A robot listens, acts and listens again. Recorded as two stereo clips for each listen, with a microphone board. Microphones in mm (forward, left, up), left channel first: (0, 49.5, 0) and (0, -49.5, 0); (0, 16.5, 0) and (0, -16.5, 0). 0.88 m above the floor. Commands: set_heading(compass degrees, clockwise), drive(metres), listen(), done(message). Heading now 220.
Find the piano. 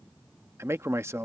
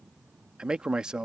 listen()
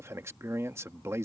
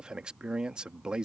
listen()
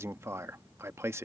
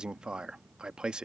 done("I can't make out a piano, only a man speaking.")